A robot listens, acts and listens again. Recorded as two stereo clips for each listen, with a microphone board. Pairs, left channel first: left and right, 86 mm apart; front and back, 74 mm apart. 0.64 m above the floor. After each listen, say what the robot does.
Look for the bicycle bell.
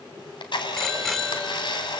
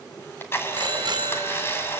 Turn 175° left.
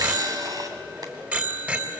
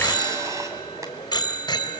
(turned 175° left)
Turn 20° right.
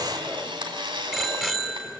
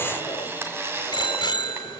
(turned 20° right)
Found it: a bicycle bell, straight ahead.